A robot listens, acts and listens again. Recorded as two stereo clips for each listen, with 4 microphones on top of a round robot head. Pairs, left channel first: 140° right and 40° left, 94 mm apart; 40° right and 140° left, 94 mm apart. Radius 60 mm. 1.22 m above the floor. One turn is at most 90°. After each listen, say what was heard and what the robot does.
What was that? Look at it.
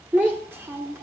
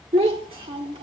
The child speaking: 105° left. Turn 90° left.
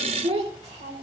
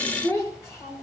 The child speaking is now 20° left. Turn 20° left.
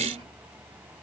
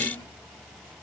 Keep listening.
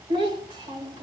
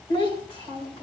Found it: a child speaking, straight ahead.